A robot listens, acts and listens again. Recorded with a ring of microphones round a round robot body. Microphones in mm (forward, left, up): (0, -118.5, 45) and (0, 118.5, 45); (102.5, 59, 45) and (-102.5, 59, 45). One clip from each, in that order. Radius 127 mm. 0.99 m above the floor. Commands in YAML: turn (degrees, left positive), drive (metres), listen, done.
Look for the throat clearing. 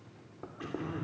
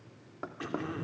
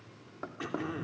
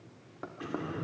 turn: 25
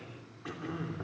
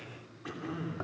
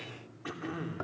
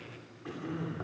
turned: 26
done: "Found it: throat clearing, straight ahead."